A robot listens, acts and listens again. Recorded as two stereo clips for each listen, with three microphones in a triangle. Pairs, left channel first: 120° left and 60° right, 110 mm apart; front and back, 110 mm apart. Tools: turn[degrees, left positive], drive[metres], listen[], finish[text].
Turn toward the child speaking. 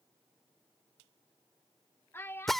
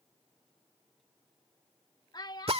Thought: The child speaking: 50° left.
Action: turn[50]
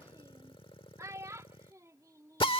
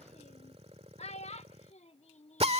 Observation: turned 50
Action: finish[Found it: a child speaking, straight ahead.]